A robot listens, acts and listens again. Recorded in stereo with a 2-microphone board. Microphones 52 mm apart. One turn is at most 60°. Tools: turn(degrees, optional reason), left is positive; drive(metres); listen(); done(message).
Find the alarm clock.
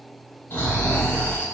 listen()
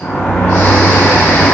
listen()
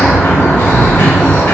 done("I can't make out an alarm clock to turn to.")